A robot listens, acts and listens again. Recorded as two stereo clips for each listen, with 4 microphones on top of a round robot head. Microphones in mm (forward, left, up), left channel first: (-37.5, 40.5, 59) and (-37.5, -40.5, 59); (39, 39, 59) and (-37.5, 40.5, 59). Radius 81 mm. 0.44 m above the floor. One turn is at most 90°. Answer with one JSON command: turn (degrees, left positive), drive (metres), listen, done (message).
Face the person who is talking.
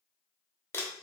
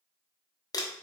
{"listen": true}
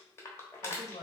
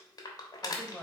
{"turn": 80}
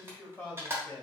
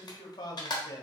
{"turn": 20}
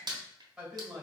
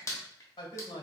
{"done": "Facing the man speaking."}